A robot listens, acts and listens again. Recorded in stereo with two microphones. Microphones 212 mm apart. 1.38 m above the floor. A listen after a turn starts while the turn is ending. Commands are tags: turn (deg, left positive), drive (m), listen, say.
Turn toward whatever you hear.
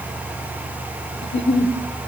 <turn deg="60"/>
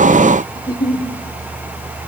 <turn deg="20"/>
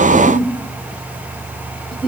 <say>Facing the giggle, 1 to 2 m away.</say>